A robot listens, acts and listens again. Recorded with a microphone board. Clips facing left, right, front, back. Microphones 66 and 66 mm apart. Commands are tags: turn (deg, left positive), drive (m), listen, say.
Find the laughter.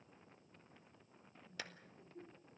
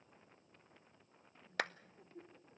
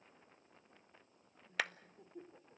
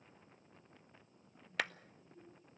<turn deg="-20"/>
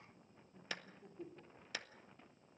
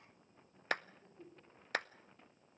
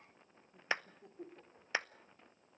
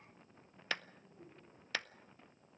<turn deg="15"/>
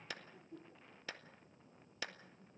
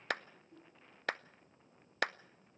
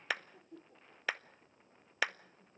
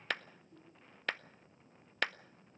<turn deg="25"/>
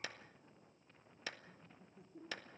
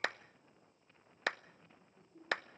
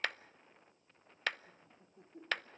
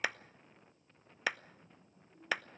<turn deg="10"/>
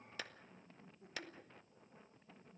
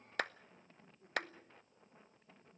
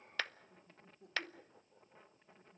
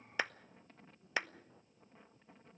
<say>Facing the laughter, 2 to 4 m away.</say>